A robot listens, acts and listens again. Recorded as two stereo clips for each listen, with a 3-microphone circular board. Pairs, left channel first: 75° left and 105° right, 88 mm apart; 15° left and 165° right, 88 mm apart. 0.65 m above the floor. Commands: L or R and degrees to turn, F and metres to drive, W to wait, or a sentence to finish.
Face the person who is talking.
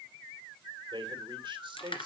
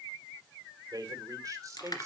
R115
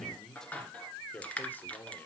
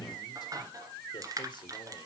W
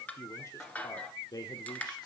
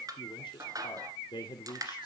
L40
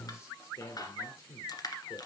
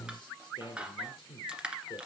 L25
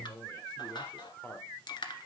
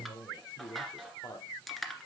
L10
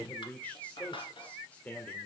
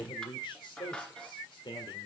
Found it: a man speaking, straight ahead.